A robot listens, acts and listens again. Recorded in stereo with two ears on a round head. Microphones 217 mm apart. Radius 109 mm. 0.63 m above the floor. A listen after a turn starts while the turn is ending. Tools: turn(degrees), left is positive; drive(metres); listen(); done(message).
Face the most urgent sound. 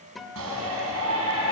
turn(degrees=-65)
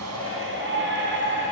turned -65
turn(degrees=-50)
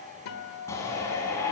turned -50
turn(degrees=10)
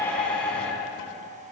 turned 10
done("Facing the shout, over 4 m away.")